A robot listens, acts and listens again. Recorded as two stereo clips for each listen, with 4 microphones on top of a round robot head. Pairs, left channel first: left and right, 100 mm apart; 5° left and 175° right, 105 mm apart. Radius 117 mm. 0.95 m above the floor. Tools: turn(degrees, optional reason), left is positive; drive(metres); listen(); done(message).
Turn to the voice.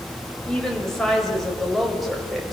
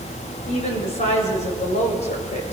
done("Found it: a woman speaking, straight ahead.")